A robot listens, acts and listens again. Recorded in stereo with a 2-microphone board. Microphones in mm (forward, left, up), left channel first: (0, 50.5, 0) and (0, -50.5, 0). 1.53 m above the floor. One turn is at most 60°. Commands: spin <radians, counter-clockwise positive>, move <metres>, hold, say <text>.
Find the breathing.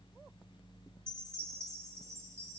hold
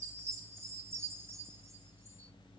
hold
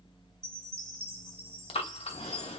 spin 1.05
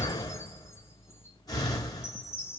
spin 0.61
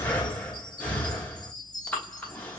spin 0.26
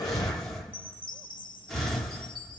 say Facing the breathing, under 1 m away.